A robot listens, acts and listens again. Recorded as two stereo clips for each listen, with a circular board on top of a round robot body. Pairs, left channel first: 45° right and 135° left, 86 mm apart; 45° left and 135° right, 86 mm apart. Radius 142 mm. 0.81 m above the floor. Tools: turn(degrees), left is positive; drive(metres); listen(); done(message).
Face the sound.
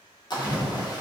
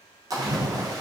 turn(degrees=-85)
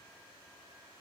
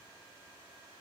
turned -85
done("I heard a splash from this way, but can't make it out now.")